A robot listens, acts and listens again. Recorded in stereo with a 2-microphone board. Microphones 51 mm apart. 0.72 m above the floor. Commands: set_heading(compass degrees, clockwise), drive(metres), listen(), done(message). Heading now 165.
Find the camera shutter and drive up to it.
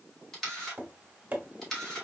set_heading(135)
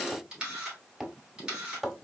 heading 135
set_heading(155)
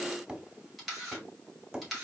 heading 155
drive(1.0)
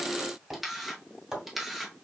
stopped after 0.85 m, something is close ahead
done("I am next to the camera shutter.")